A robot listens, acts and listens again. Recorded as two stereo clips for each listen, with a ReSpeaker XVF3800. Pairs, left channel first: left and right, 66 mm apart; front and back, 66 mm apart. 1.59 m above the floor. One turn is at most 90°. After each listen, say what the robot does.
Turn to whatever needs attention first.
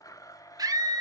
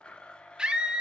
Turn 90° right.
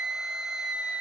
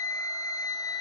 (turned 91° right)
Turn 10° right.
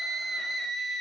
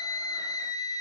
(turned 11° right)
Facing the scream.